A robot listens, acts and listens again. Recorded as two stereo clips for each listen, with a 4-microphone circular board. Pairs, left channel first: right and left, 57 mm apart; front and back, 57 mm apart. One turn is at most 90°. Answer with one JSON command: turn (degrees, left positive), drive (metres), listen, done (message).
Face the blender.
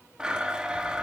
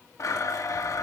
{"turn": 15}
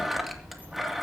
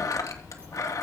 {"done": "Found it: a blender, straight ahead, 2 to 4 m away."}